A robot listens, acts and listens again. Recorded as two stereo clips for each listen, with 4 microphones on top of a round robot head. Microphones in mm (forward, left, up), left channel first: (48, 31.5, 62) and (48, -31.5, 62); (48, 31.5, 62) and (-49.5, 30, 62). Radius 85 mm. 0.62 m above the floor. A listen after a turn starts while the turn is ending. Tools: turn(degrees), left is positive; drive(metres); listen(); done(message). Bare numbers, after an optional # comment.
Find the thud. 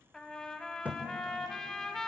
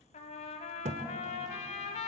# The thud: 165° right.
turn(-165)
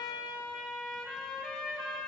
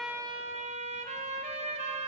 done("Facing where the thud came from. I can't hear it now.")